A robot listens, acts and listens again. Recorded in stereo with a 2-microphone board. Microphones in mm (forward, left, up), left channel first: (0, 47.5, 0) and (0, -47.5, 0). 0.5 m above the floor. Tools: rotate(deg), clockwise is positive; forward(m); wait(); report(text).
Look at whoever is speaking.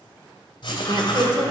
rotate(55)
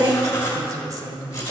rotate(50)
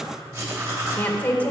rotate(-20)
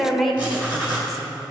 report("Facing the woman speaking, 1 to 2 m away.")